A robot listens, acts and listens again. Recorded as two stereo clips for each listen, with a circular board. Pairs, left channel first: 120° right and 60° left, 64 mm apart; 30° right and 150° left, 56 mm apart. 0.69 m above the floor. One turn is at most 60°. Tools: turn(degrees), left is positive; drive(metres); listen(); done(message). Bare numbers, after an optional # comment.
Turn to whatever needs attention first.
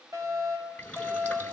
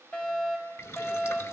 # The fire alarm: 30° left.
turn(30)
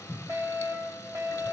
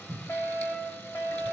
# The fire alarm is now 15° left.
turn(15)
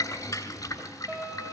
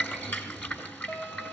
done("Facing the fire alarm, over 4 m away.")